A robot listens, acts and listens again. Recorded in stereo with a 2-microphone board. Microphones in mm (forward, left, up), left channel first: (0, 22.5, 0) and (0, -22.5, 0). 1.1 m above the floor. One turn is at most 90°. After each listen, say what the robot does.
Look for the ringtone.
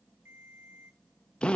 Turn 70° right.
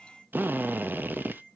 Facing the ringtone, 2 to 4 m away.